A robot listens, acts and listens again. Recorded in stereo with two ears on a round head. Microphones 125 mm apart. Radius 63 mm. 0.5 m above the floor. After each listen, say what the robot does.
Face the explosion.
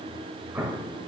Turn 30° right.
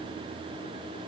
Keep listening.
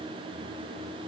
I heard an explosion, but can't make it out now. It was about 15° left or 135° right.